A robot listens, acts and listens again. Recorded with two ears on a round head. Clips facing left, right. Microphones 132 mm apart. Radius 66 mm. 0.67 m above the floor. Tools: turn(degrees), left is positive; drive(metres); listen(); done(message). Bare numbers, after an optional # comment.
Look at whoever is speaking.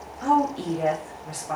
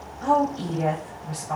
# The woman speaking: about 65° left or 115° left.
turn(65)
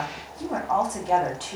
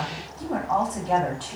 # So it is at 30° left.
turn(30)
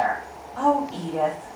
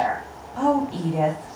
# The woman speaking is now 10° right.
turn(-10)
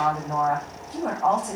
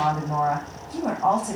done("Facing the woman speaking, 1 to 2 m away.")